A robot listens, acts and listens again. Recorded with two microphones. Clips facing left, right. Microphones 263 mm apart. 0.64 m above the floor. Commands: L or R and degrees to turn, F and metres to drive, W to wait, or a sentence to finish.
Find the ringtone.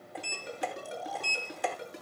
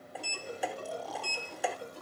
L90
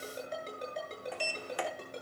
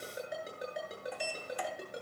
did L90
R10
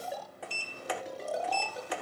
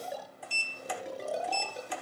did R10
Facing the ringtone, over 4 m away.